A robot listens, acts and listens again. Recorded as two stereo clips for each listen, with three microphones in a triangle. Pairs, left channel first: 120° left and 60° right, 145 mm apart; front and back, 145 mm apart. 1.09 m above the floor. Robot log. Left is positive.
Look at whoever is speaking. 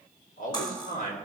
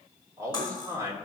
note: The man speaking: 110° left.
cmd yaw +110
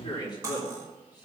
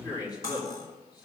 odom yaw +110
note: The man speaking is now 60° left.
cmd yaw +60
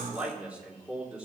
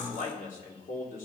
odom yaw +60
note: The man speaking is now 25° left.
cmd yaw +25
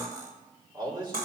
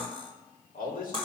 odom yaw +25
end: Found it: a man speaking, straight ahead.